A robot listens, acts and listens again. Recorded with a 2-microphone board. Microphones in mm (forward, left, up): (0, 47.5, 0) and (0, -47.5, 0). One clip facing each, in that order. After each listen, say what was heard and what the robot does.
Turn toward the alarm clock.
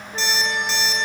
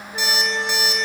Turn 30° right.
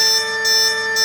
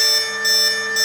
So it is at 140° right. Turn 140° right.
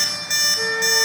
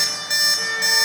The alarm clock is now 15° right. Turn 15° right.
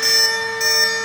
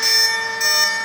Found it: an alarm clock, straight ahead.